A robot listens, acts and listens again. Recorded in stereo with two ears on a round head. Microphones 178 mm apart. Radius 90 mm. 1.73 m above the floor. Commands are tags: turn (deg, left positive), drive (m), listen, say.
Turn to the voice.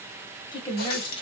<turn deg="25"/>
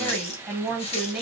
<say>Found it: a woman speaking, straight ahead.</say>